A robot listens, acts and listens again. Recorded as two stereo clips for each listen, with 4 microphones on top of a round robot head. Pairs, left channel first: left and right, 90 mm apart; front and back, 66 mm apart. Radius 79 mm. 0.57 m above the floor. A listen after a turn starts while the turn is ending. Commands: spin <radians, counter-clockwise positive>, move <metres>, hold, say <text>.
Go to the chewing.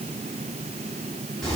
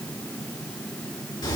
hold
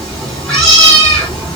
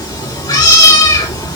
hold
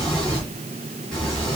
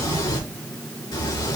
say I can't make out chewing, only a cat meowing.